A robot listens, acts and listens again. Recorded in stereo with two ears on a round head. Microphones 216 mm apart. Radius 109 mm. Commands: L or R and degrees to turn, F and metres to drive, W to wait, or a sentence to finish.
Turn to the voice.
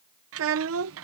R60
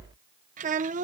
R35
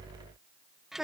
Facing the child speaking.